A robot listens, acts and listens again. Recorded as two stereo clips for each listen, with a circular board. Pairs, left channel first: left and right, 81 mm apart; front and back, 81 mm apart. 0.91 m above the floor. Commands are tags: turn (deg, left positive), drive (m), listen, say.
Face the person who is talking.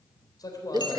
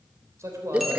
<turn deg="130"/>
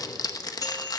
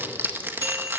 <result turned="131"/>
<listen/>
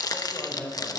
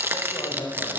<turn deg="15"/>
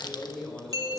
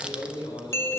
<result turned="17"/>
<say>Found it: a man speaking, straight ahead.</say>